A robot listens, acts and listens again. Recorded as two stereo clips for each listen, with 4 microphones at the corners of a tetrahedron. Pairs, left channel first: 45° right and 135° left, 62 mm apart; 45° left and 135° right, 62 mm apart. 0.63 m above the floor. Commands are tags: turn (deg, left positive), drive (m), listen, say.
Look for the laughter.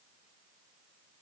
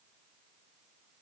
<listen/>
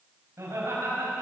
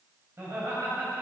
<turn deg="175"/>
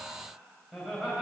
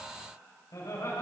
<turn deg="50"/>
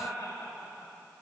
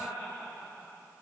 <say>Facing the laughter.</say>